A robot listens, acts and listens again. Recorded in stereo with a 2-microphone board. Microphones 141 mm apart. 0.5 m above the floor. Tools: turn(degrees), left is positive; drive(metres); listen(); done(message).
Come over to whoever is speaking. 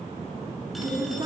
turn(degrees=-35)
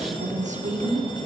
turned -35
turn(degrees=-115)
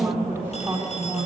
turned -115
turn(degrees=-15)
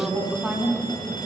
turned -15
drive(metres=1.0)
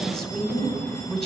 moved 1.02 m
drive(metres=1.0)
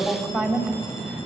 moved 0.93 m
drive(metres=1.0)
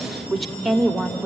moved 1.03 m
drive(metres=1.0)
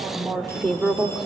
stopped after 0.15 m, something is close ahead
done("I am next to the woman speaking.")